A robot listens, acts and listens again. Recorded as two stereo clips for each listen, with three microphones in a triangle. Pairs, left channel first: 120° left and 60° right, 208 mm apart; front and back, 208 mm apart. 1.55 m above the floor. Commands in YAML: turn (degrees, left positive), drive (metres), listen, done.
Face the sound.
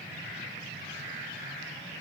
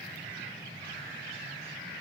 listen: true
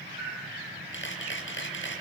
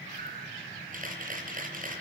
turn: 135
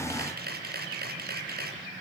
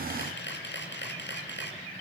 turn: -25
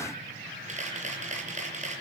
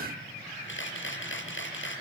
turn: -10
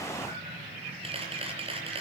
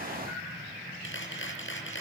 done: "Found it: a camera shutter, straight ahead."